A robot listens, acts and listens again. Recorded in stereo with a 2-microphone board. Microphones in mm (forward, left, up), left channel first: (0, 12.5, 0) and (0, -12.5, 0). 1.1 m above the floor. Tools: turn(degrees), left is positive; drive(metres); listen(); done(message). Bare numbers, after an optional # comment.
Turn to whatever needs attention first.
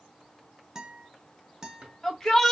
# The shout: about 25° left or 155° left.
turn(25)
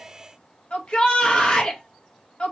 # So it is at 130° left.
turn(130)
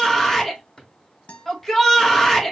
done("Found it: a shout, straight ahead, 1 to 2 m away.")